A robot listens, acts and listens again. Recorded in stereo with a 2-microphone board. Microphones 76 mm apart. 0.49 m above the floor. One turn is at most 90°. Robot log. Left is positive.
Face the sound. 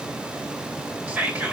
note: The whispering: about 20° right or 160° right.
cmd yaw -20
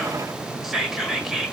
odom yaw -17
end: Facing the whispering, 1 to 2 m away.